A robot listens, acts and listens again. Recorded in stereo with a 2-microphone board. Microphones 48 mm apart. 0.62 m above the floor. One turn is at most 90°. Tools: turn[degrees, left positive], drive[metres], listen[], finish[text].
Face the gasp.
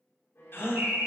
Thought: The gasp: about 60° left or 120° left.
Action: turn[60]
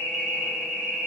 Action: listen[]
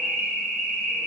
Action: finish[I heard a gasp, but can't make it out now. It was about straight ahead or 60° left.]